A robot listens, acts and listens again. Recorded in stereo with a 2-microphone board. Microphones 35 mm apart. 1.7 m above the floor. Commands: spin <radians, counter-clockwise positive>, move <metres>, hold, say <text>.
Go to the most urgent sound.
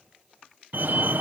spin -1.22
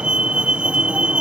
spin -0.61
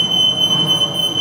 move 1.0
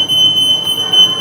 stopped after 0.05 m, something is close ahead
say Something is in my way. I am facing the fire alarm but have not reached it.